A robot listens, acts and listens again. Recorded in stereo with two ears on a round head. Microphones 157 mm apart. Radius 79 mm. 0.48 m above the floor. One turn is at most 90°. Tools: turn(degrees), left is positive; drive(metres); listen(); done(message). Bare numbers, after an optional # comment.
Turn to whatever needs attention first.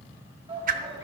# The shout: about 35° right or 145° right.
turn(-35)
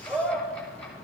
done("Facing the shout.")